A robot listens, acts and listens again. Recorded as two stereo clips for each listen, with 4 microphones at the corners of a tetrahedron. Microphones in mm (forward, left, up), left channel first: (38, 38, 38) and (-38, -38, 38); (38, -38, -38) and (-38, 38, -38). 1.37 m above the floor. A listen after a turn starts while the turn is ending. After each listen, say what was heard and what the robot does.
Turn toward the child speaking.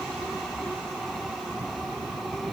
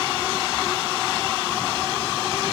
Keep listening.
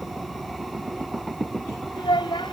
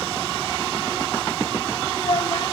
Facing the child speaking.